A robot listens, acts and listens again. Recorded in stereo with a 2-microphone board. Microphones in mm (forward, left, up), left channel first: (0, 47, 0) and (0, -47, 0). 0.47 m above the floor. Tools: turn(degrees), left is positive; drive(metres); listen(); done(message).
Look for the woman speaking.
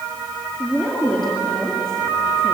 turn(degrees=30)
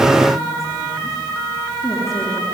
listen()
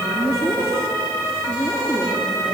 turn(degrees=145)
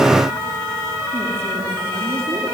listen()
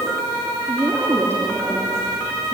turn(degrees=-25)
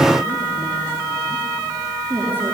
turn(degrees=-20)
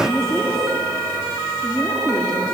done("Facing the woman speaking.")